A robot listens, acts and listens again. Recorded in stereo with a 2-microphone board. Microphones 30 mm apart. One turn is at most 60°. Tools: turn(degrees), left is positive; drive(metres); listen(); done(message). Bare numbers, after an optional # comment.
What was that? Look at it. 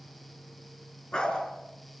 # The dog barking: about 25° left or 155° left.
turn(25)
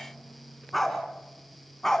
turn(30)
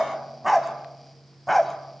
done("Facing the dog barking.")